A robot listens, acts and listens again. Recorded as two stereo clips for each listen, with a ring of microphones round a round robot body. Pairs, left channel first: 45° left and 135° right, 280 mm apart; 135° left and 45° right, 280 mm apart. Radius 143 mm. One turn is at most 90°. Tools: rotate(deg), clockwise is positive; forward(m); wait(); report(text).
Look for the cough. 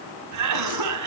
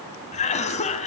rotate(90)
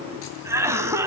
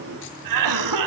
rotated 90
rotate(55)
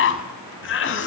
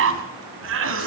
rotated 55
report("Found it: a cough, straight ahead.")